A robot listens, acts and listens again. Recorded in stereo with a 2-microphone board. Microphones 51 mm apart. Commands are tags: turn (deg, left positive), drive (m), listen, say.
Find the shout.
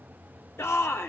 <turn deg="60"/>
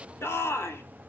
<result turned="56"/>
<turn deg="60"/>
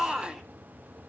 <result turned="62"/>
<say>Facing the shout, 2 to 4 m away.</say>